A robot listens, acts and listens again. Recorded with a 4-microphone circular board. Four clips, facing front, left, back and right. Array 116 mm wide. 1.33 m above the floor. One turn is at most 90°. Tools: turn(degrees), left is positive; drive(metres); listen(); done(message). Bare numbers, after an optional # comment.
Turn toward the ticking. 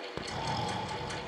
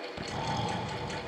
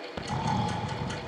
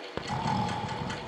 # The ticking: 80° right.
turn(-80)
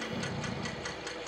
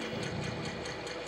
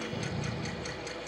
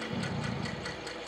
# The ticking is now 10° right.
turn(-10)
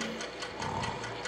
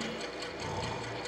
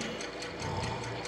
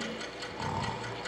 done("Facing the ticking, 2 to 4 m away.")